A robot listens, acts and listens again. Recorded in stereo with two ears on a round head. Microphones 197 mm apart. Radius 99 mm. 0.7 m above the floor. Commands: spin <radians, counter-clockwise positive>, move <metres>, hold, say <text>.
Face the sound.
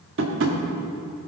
spin -1.05
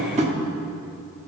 spin -0.61
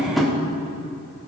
say Facing the tapping, 1 to 2 m away.